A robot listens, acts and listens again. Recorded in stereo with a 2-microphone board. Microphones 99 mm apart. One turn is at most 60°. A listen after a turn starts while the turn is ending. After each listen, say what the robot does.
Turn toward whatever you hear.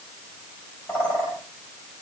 Turn 25° left.
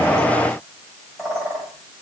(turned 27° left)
Facing the bird.